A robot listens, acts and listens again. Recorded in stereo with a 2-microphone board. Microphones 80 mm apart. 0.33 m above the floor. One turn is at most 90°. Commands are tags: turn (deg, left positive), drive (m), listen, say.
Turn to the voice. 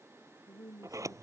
<turn deg="45"/>
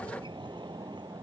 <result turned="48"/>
<listen/>
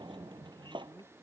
<say>Facing the woman speaking.</say>